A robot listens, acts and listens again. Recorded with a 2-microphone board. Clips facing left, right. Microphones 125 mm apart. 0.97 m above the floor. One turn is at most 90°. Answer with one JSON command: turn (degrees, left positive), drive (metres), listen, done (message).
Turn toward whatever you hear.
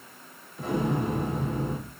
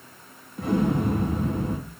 {"turn": -55}
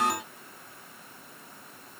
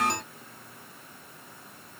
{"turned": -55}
{"listen": true}
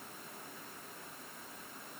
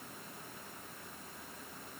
{"done": "I heard an explosion, but can't make it out now. It was about straight ahead or 70° right."}